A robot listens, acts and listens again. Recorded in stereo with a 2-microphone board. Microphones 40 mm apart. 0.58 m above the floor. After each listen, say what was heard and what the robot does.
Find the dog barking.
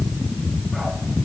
Keep listening.
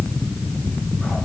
Keep listening.
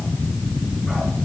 I can't make out a dog barking to turn to.